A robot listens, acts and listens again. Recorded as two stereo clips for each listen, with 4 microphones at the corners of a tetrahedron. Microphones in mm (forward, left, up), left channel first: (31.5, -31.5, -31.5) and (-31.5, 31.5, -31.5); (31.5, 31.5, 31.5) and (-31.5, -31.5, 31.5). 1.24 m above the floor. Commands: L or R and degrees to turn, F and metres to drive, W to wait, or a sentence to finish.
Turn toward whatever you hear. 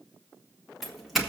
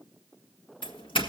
L45
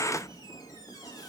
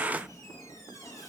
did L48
W
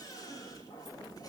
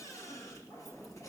W
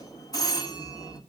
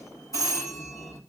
Found it: a doorbell, straight ahead, 2 to 4 m away.